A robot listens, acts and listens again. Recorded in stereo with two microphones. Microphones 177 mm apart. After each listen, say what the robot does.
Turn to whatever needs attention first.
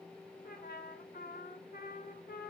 Keep listening.
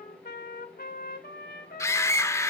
Turn 15° left.
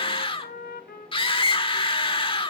Turn 150° left.
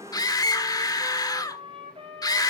Turn 25° left.
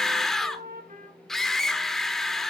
Facing the scream.